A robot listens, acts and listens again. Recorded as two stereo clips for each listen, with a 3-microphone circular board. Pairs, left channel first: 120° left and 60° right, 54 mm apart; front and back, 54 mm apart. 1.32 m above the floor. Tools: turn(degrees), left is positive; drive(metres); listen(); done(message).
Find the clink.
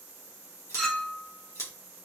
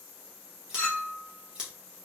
turn(degrees=45)
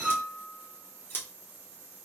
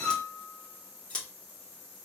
done("Found it: a clink, straight ahead.")